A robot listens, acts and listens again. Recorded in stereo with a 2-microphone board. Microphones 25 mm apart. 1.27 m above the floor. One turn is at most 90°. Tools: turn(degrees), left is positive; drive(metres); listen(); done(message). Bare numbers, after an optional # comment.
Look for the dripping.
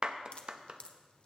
# The dripping: about 50° left or 130° left.
turn(50)
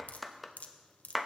# So it is at 80° left.
turn(80)
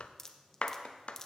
# The dripping is now 15° left.
turn(15)
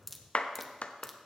done("Found it: dripping, straight ahead, under 1 m away.")